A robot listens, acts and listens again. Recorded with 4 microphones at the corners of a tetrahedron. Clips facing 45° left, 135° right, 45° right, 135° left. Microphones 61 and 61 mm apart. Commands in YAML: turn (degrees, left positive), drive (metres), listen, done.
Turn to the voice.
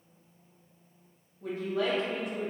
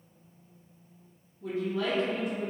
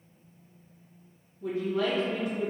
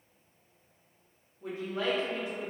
turn: 75
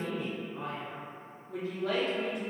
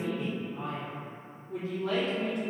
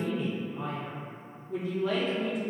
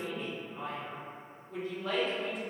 turn: 40
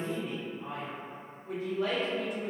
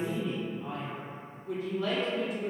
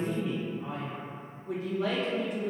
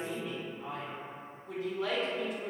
done: "Found it: a man speaking, straight ahead, 1 to 2 m away."